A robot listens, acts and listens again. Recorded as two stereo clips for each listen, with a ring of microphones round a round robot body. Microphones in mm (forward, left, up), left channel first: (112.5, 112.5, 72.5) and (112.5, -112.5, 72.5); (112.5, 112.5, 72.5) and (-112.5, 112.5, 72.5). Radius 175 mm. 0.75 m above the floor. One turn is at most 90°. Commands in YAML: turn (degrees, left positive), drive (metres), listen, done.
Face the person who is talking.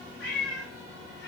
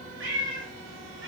listen: true
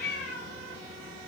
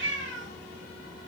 listen: true
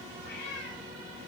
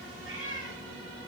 done: "I can't make out anyone speaking to turn to."